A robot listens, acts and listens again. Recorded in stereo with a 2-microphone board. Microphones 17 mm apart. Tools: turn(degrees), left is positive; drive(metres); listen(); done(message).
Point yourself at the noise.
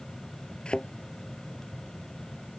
turn(degrees=70)
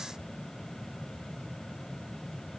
listen()
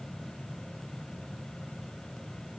done("I heard a thud, but can't make it out now. It was about straight ahead or 40° left.")